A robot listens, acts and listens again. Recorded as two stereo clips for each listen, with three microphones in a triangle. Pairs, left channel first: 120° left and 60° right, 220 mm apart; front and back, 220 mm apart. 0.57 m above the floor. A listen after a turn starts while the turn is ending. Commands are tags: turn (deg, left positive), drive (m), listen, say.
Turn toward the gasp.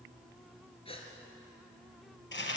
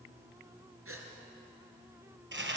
<turn deg="-175"/>
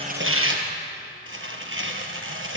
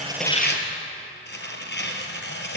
<say>Facing where the gasp came from. I can't hear it now.</say>